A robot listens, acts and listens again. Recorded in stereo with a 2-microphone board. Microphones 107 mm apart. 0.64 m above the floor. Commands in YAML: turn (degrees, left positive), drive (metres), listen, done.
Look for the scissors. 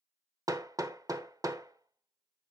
listen: true
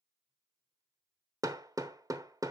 listen: true
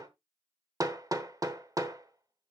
done: "I can't make out scissors to turn to."